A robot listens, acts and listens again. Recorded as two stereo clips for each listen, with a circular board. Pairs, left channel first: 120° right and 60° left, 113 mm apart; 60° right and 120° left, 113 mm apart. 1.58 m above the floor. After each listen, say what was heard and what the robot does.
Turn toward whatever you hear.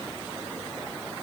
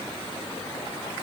Keep listening.
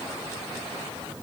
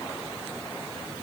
Keep listening.
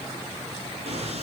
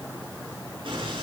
The explosion: 80° left. Turn 80° left.
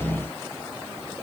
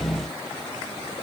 I heard an explosion from this way, but can't make it out now.